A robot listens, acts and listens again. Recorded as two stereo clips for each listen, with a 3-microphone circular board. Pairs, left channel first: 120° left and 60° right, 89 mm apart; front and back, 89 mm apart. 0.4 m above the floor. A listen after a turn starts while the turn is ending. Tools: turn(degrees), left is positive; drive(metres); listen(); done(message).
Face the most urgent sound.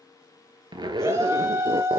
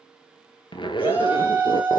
turn(degrees=-110)
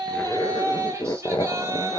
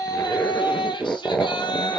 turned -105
done("Facing the shout, 2 to 4 m away.")